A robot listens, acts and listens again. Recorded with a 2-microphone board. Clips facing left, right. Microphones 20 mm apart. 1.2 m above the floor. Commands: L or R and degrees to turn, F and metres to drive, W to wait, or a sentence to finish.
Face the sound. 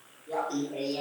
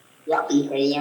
R55
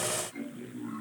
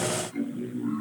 Facing the laughter.